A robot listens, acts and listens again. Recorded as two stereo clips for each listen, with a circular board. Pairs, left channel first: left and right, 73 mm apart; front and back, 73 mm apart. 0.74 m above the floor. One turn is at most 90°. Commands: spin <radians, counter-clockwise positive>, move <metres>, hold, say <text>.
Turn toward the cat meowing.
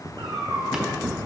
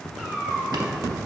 spin -1.57
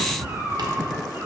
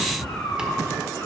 spin -0.70
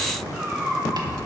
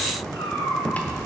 spin -0.35
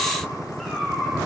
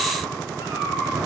say Found it: a cat meowing, straight ahead, over 4 m away.